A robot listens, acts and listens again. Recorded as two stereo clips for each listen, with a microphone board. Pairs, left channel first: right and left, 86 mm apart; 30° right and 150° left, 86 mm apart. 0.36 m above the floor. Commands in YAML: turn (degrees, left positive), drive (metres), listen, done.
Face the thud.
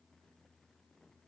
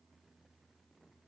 listen: true
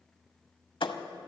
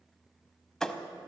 turn: -115
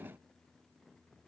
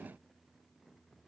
done: "Facing where the thud came from. I can't hear it now."